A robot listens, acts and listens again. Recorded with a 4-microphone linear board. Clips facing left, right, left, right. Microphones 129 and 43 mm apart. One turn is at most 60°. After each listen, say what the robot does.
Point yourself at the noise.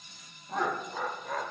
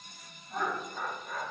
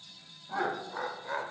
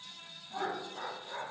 Turn 60° left.
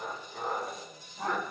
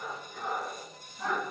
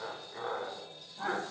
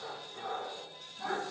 Turn 45° left.
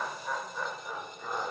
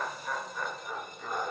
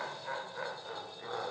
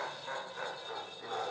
Turn 10° left.
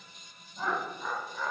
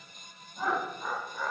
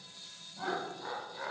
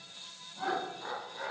Found it: laughter, straight ahead, 1 to 2 m away.